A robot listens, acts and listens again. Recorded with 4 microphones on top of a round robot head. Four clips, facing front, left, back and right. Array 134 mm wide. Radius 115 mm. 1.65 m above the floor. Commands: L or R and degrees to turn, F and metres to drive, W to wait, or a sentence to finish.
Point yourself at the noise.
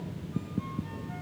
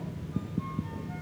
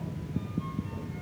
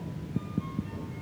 W
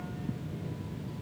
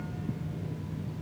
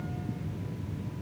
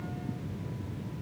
W
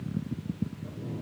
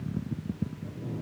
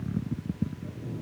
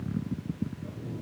I can't make out anything.